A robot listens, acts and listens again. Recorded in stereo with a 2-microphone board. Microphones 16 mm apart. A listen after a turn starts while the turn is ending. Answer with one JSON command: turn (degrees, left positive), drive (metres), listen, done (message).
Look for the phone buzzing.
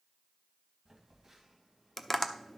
{"turn": -20}
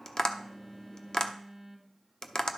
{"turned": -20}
{"done": "Facing the phone buzzing."}